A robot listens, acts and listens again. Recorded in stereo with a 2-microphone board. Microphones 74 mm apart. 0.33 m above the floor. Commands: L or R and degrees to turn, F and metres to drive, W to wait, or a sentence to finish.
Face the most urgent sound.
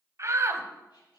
R45
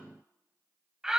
R10
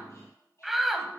Found it: a shout, straight ahead, 1 to 2 m away.